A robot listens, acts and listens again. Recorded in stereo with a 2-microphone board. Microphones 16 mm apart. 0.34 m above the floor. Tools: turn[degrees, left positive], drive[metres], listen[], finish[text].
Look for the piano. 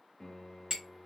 Thought: The piano: about 20° left or 160° left.
Action: turn[20]
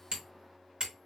Action: finish[Facing the piano, 1 to 2 m away.]